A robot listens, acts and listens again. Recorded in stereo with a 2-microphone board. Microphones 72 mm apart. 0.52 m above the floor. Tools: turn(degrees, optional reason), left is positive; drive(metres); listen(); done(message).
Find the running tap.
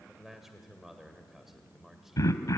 listen()
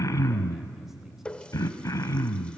turn(degrees=15, reason="The running tap: about 15° left or 165° left.")
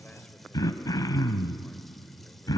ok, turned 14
listen()
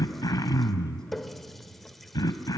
done("Found it: a running tap, straight ahead, 1 to 2 m away.")